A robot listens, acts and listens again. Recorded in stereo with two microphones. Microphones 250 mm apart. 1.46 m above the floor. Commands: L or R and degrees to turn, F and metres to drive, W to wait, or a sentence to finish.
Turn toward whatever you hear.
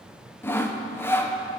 L30
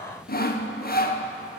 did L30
L140
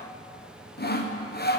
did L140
L45
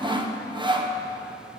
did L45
R20
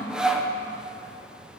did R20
Facing the sawing.